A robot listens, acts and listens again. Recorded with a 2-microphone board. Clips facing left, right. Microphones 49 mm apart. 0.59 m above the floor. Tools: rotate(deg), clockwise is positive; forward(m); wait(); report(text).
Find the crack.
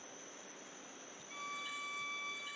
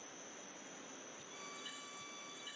wait()
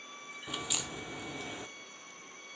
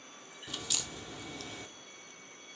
rotate(-15)
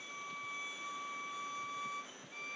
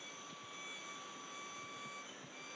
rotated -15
wait()
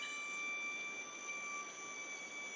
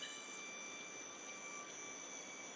report("I heard a crack, but can't make it out now. It was about straight ahead or 150° left.")